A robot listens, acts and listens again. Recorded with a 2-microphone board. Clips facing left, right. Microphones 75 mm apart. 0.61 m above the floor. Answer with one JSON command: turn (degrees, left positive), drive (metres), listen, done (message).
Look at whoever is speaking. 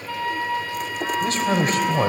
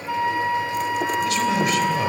{"turn": 40}
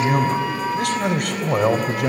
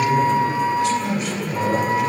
{"turn": 95}
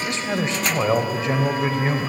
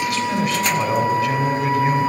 {"turn": 30}
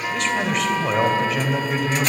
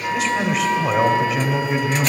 {"done": "Found it: a man speaking, straight ahead."}